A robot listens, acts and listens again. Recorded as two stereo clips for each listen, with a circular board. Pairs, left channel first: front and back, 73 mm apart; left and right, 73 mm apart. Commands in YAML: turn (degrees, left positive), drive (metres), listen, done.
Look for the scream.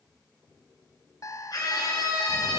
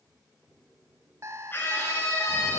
turn: 30
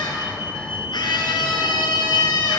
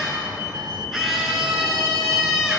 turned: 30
done: "Facing the scream, over 4 m away."